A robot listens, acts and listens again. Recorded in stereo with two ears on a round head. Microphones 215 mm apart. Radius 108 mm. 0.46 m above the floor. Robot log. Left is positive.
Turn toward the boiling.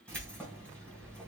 cmd idle
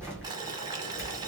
note: The boiling: about 15° right or 165° right.
cmd yaw -15
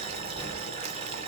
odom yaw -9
note: The boiling: about 25° right or 155° right.
cmd yaw -25
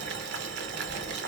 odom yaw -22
note: So it is at 135° right.
cmd yaw -135
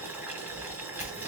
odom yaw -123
note: The boiling is now 10° right.
cmd yaw -10
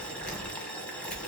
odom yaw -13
end: Found it: boiling, straight ahead, under 1 m away.